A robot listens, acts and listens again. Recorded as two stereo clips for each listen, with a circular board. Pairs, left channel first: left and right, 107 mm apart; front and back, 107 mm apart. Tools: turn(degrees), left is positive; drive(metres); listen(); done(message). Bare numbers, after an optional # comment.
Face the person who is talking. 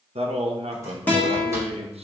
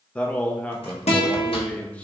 # The man speaking: 80° right.
turn(-80)
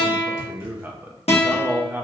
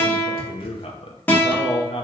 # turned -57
# The man speaking is now 20° right.
turn(-20)
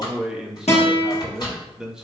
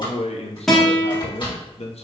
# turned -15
done("Facing the man speaking, under 1 m away.")